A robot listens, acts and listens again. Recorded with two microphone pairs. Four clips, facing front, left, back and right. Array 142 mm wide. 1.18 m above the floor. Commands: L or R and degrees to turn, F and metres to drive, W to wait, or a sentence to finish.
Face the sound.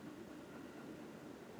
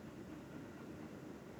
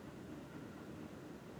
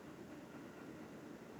W
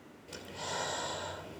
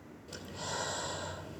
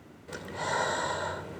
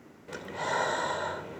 R125
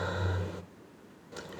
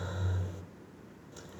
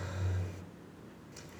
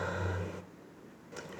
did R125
R40
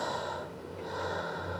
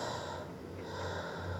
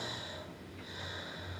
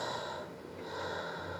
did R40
R10
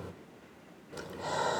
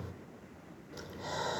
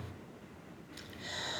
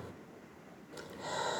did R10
Found it: breathing, straight ahead.